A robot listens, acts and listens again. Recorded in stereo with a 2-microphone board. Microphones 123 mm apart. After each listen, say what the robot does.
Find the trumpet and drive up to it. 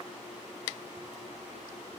Keep listening.
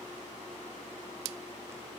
Keep listening.
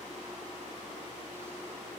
I can't make out a trumpet to turn to.